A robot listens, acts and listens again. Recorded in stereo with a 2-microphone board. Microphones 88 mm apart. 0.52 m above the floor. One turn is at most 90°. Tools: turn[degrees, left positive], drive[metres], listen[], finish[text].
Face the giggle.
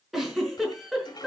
Action: turn[30]
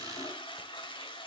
Action: listen[]
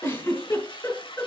Thought: So it is at 150° left.
Action: turn[90]
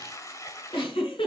Thought: The giggle is now 90° left.
Action: turn[90]
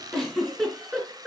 Action: finish[Found it: a giggle, straight ahead, over 4 m away.]